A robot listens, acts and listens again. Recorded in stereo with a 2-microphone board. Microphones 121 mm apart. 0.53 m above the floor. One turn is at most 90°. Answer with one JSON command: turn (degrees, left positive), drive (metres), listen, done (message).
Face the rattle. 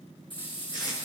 {"turn": 40}
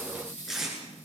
{"turn": 90}
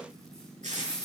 {"done": "Facing the rattle."}